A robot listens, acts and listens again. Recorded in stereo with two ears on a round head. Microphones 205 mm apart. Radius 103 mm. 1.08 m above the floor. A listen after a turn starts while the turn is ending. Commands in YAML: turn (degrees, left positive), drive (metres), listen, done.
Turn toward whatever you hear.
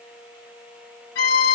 turn: 45
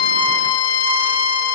turn: 80
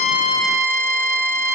turn: -15
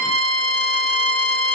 done: "Found it: a violin, straight ahead, 2 to 4 m away."